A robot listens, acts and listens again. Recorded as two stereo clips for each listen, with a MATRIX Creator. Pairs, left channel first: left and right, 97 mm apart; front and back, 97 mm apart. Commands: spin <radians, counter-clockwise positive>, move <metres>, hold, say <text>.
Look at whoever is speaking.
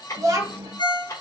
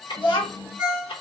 spin -0.61
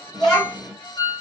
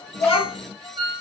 say Facing the child speaking, 1 to 2 m away.